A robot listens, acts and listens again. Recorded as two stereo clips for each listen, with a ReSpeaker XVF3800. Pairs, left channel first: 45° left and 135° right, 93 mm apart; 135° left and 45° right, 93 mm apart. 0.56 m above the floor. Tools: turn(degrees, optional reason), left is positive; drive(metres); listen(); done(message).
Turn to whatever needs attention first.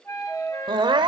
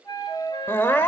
turn(degrees=-160, reason="The crying: 160° right.")
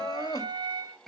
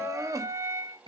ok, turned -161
done("Found it: crying, straight ahead, 1 to 2 m away.")